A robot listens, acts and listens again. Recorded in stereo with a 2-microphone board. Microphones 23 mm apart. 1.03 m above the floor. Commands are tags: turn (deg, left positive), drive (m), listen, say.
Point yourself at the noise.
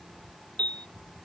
<turn deg="90"/>
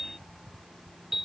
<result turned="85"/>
<turn deg="-10"/>
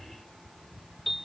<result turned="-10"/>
<say>Facing the piano.</say>